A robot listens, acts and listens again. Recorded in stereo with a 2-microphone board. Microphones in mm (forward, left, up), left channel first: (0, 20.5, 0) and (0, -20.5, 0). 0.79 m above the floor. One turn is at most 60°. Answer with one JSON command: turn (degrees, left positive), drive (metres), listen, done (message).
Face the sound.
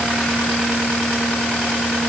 {"listen": true}
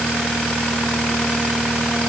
{"listen": true}
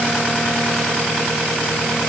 {"done": "I can't make out anything."}